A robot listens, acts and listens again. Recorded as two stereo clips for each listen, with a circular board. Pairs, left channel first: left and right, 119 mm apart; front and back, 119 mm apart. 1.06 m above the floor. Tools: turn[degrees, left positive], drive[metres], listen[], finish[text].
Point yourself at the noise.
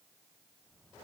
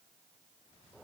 Action: listen[]
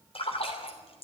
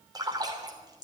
Thought: The splash: 125° left.
Action: turn[125]
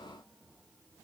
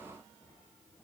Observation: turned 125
Action: finish[I heard a splash from this way, but can't make it out now.]